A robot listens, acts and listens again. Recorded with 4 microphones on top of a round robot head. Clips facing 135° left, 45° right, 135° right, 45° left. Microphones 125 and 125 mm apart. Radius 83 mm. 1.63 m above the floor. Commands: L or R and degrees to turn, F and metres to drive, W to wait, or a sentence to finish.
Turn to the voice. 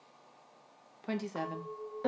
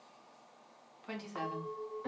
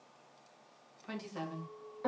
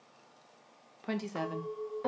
L90
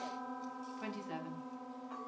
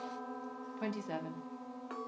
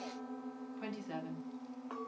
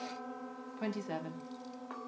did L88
Found it: a woman speaking, straight ahead.